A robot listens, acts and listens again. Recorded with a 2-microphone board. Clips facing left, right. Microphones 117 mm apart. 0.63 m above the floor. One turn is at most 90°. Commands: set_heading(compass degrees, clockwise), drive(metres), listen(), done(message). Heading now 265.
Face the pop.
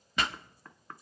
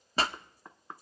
set_heading(300)
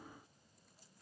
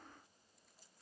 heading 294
listen()
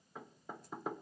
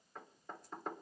done("I heard a pop, but can't make it out now. It was about 5° right or 120° right.")